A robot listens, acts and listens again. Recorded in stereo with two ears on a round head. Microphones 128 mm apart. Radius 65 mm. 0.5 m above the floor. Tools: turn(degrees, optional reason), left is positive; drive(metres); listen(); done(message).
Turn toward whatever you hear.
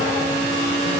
listen()
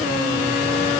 listen()
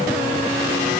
done("I can't make out anything to turn to.")